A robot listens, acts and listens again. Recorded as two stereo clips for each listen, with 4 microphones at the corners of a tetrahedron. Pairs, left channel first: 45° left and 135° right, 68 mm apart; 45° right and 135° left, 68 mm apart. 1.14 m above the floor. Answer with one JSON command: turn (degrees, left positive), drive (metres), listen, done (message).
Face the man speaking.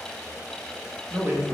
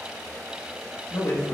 {"turn": -80}
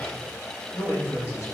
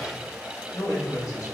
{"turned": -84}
{"turn": -10}
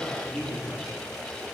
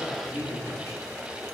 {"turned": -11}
{"done": "Found it: a man speaking, straight ahead."}